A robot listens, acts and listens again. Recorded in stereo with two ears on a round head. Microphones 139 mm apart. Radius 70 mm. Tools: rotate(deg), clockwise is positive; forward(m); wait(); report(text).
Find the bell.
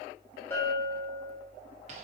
rotate(-15)
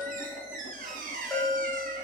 report("Found it: a bell, straight ahead, 2 to 4 m away.")